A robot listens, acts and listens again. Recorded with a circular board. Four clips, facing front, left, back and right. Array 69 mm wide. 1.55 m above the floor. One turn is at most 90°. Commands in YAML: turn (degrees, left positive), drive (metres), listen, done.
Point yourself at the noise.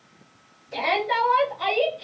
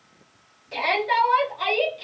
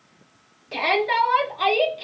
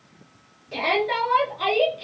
turn: 90
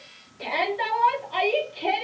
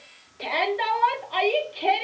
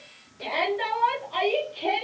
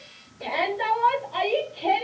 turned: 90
turn: 80
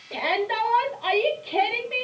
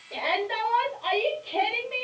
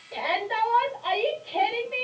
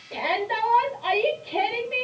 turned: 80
done: "Found it: a shout, straight ahead, under 1 m away."